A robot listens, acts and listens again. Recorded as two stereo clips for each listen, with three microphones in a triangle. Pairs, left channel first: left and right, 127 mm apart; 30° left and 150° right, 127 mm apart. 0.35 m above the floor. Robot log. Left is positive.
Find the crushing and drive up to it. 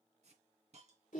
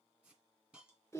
cmd idle
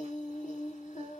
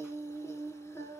cmd idle
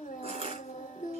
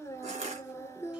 note: The crushing: 125° right.
cmd yaw -125
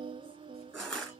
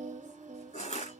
cmd fwd 1.0
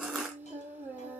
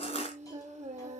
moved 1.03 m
cmd fwd 1.0
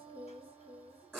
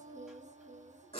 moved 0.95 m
cmd fwd 1.0
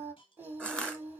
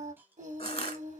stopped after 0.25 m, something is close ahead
note: The crushing is now 10° left.
cmd yaw +10
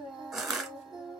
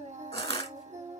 end: I am next to the crushing.